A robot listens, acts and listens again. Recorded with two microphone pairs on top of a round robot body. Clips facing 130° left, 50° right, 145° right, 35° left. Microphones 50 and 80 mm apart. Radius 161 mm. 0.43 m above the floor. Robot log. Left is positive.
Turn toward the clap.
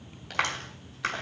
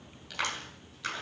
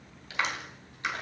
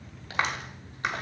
note: The clap: 80° left.
cmd yaw +80
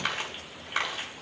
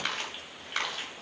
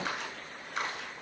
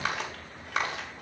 note: The clap is now 45° left.
cmd yaw +45
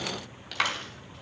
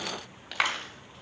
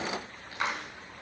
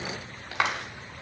note: The clap is now 20° left.
cmd yaw +20
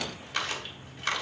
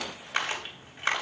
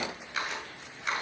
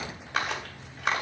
end: Found it: a clap, straight ahead.